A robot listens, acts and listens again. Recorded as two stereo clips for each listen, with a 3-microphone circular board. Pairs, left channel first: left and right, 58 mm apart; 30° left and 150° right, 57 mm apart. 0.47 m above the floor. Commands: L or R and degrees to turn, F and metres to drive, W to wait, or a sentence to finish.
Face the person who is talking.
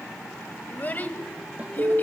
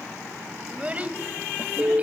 L150
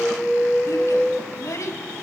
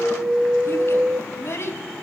L70
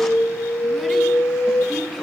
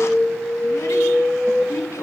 Facing the child speaking.